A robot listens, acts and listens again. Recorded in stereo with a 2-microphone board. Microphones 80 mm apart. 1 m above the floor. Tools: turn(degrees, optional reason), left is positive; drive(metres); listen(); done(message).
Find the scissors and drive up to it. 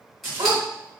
turn(degrees=30)
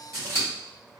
turn(degrees=145, reason="So it is at 145° left.")
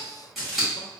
drive(metres=1.0)
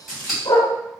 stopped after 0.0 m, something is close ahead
done("Something is in my way. I am facing the scissors but have not reached it.")